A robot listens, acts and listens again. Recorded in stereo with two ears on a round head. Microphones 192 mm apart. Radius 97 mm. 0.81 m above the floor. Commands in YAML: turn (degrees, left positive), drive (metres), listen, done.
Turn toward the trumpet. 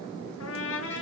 turn: 70
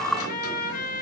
turn: 40
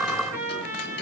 turn: -10
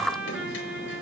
done: "Found it: a trumpet, straight ahead, over 4 m away."